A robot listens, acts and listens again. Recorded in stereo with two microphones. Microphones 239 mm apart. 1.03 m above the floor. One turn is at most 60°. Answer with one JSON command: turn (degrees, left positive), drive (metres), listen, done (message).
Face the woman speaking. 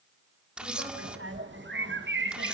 {"turn": -60}
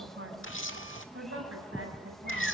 {"turn": -60}
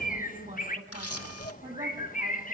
{"turn": -35}
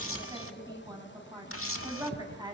{"turn": -15}
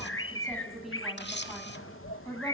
{"done": "Facing the woman speaking."}